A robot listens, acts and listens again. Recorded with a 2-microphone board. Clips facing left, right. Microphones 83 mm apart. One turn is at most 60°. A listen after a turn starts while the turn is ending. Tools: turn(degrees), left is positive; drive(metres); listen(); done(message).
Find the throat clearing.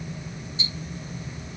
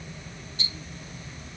listen()
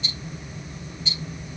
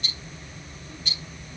listen()
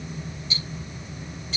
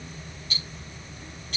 done("I can't make out throat clearing, only ticking.")